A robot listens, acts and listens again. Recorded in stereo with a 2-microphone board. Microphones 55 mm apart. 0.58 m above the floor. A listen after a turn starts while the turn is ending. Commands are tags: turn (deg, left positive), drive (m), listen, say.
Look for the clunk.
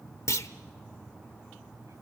<turn deg="70"/>
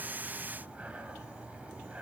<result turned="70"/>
<listen/>
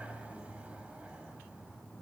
<say>I heard a clunk, but can't make it out now. It was about straight ahead or 40° left.</say>